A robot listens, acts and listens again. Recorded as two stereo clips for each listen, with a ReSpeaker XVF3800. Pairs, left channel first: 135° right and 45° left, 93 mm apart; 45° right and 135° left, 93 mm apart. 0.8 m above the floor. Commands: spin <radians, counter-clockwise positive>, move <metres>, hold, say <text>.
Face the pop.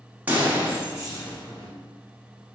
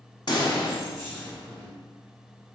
spin -0.44
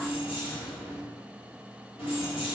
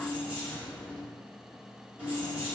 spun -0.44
say I heard a pop from this way, but can't make it out now.